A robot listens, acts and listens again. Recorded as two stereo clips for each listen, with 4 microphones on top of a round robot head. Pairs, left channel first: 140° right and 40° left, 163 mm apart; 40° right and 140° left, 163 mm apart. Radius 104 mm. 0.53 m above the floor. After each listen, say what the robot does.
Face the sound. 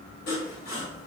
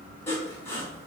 Turn 115° right.
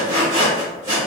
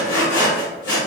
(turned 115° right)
Turn 30° right.
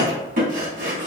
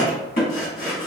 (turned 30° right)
Facing the sawing.